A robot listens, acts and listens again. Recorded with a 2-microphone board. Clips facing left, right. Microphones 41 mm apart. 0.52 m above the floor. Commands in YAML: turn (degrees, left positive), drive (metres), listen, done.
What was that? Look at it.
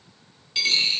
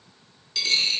turn: 25
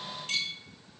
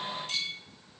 turn: 125
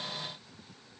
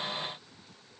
done: "I heard a dropped coin from this way, but can't make it out now."